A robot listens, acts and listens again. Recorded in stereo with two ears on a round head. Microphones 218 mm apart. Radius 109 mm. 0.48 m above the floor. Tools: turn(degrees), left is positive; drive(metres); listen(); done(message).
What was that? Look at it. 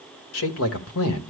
turn(degrees=65)
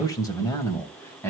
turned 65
turn(degrees=10)
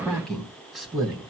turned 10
done("Facing the man speaking.")